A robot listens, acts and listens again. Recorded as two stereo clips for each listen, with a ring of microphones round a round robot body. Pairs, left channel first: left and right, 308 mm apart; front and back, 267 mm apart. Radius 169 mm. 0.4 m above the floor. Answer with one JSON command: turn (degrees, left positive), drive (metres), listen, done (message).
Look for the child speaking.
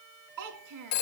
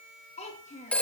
{"turn": -65}
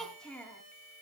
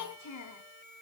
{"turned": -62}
{"done": "Facing the child speaking."}